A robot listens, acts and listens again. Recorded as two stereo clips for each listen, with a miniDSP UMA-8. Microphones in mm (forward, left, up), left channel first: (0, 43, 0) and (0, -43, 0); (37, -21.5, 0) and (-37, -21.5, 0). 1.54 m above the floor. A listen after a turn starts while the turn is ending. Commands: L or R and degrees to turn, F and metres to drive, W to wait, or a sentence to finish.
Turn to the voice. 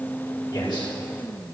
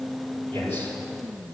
L60
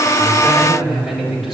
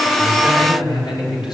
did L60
Found it: a man speaking, straight ahead, over 4 m away.